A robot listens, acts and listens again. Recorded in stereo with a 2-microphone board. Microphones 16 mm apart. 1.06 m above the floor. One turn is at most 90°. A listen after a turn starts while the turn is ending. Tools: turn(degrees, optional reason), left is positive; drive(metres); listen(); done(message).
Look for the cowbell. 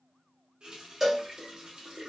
turn(degrees=-30)
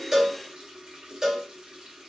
turn(degrees=-90, reason="So it is at 135° right.")
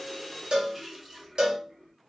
turn(degrees=-75, reason="The cowbell is now 75° right.")
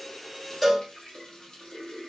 done("Found it: a cowbell, straight ahead, 1 to 2 m away.")